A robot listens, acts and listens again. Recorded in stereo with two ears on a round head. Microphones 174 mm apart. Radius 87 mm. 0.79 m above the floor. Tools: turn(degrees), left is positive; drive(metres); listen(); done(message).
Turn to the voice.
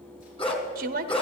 turn(degrees=-45)
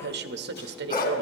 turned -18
turn(degrees=-120)
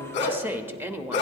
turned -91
turn(degrees=-10)
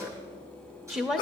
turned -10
done("Found it: a woman speaking, straight ahead, under 1 m away.")